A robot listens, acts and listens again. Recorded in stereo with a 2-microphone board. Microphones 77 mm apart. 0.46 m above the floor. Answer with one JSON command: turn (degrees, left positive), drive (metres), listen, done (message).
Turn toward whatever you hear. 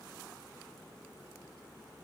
{"listen": true}
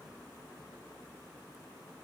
{"listen": true}
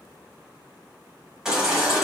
{"turn": -30}
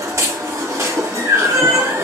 {"turn": -140}
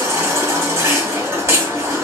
{"turn": -35}
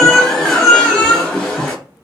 {"turn": 10}
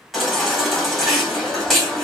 {"done": "Facing the baby crying."}